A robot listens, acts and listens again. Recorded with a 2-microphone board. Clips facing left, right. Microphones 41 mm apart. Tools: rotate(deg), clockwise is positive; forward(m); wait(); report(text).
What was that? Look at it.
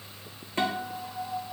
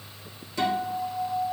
rotate(-40)
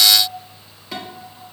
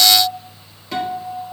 report("Found it: a guitar, straight ahead, 1 to 2 m away.")